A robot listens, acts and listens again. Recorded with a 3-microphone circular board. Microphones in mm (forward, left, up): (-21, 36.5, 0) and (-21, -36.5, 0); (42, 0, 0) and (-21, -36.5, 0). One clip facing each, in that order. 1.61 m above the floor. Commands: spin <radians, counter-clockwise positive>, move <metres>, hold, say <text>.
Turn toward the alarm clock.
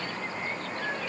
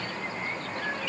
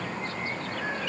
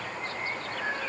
hold
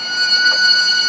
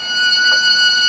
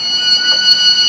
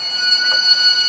hold
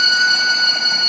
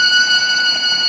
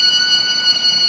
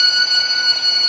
say I can't make out an alarm clock, only a violin.